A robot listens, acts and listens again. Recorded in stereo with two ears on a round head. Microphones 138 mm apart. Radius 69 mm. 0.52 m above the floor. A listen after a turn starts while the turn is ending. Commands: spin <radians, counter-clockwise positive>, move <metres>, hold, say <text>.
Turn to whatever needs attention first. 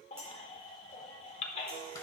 spin 0.70
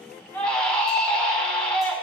say Facing the baby crying.